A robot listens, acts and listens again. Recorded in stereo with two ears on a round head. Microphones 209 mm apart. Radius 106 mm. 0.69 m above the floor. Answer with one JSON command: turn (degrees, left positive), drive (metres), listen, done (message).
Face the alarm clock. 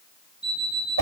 {"turn": -30}
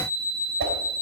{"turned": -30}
{"turn": 30}
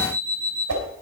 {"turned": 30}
{"done": "Facing the alarm clock."}